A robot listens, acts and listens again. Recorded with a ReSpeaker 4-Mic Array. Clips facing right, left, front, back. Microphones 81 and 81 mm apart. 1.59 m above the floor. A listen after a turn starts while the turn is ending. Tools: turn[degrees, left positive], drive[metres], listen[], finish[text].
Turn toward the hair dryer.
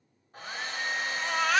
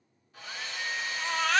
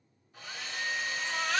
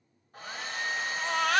Thought: The hair dryer: 135° right.
Action: turn[-135]
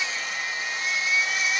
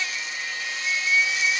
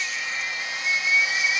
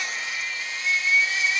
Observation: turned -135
Action: listen[]
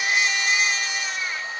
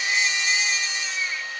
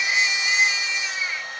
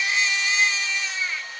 Thought: The hair dryer is now 35° right.
Action: turn[-35]
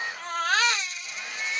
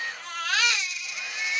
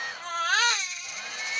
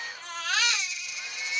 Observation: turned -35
Action: listen[]
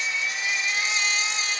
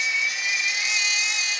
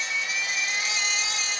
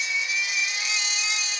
Action: listen[]
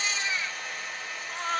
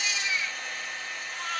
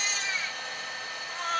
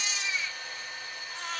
Action: finish[Found it: a hair dryer, straight ahead, 1 to 2 m away.]